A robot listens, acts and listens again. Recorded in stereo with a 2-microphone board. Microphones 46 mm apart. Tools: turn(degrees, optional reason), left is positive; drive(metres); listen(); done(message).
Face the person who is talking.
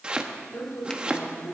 turn(degrees=65, reason="The woman speaking: about 65° left or 115° left.")
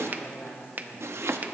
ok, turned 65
turn(degrees=50, reason="So it is at 50° left.")
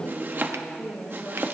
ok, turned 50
turn(degrees=20, reason="The woman speaking is now 20° left.")
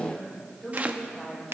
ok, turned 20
turn(degrees=10, reason="The woman speaking is now 10° left.")
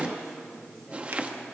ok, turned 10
done("Found it: a woman speaking, straight ahead, over 4 m away.")